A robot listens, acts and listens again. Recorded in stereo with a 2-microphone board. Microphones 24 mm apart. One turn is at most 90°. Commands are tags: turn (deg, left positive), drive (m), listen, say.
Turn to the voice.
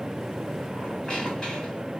<listen/>
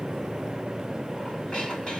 <listen/>
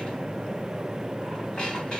<say>I can't make out anyone speaking to turn to.</say>